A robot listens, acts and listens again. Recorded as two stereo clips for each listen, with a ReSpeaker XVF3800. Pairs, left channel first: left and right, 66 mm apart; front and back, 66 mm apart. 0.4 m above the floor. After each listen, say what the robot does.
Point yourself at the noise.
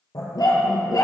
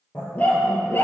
Turn 55° left.
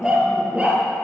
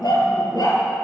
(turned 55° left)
Turn 20° right.
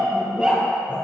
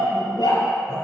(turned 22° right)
Turn 20° right.
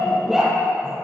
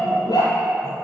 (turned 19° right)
Turn 10° right.
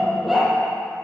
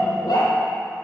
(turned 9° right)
Facing the dog barking.